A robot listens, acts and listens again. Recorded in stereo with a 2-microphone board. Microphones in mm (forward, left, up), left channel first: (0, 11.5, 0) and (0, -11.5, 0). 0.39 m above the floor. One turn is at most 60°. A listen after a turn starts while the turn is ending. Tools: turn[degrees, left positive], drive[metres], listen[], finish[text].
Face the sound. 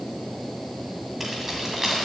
Action: turn[-30]
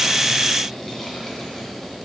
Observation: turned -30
Action: listen[]
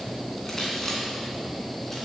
Action: listen[]
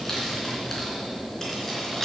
Thought: So it is at 10° left.
Action: turn[10]
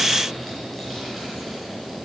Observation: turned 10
Action: listen[]
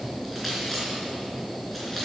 Action: listen[]
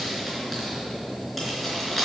Action: finish[Found it: keys jangling, straight ahead.]